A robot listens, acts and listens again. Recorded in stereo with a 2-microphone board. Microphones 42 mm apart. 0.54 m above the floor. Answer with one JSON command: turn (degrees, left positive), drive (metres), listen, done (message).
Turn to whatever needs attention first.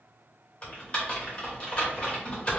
{"listen": true}
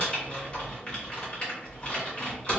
{"listen": true}
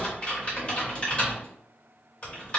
{"done": "I can't make out anything urgent, only typing on a keyboard."}